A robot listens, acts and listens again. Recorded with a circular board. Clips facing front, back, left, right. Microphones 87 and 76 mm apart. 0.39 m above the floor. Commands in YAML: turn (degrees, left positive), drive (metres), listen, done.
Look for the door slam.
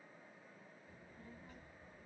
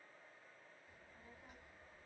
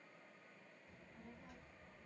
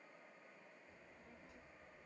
listen: true
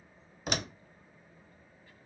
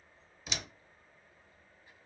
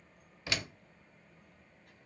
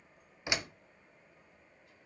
turn: -20
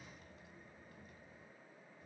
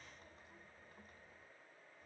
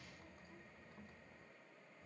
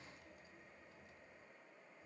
done: "I heard a door slam from this way, but can't make it out now."